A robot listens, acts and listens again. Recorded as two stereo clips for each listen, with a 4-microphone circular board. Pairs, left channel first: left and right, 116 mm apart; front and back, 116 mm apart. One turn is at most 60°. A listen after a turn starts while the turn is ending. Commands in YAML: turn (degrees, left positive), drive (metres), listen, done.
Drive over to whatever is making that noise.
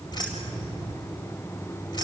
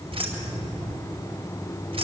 turn: 60
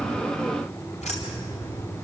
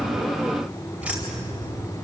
turn: 60
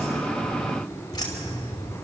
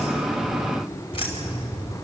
turn: 40
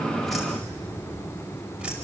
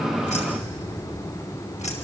turn: -10
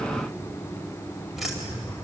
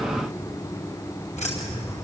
drive: 1.0
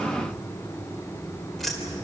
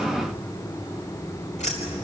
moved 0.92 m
drive: 1.0
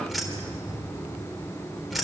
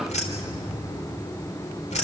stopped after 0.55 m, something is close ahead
done: "Blocked. The keys jangling is further on, straight ahead."